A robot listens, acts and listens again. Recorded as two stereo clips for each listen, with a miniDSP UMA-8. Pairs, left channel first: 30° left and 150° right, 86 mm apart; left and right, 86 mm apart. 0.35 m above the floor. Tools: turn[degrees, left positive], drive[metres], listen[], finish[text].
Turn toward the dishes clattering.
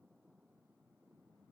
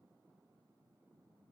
Action: listen[]
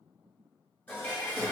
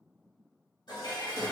Thought: The dishes clattering: 95° left.
Action: turn[95]
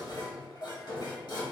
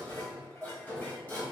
Thought: The dishes clattering is now 25° left.
Action: turn[25]
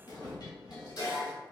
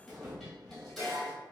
Action: finish[Facing the dishes clattering.]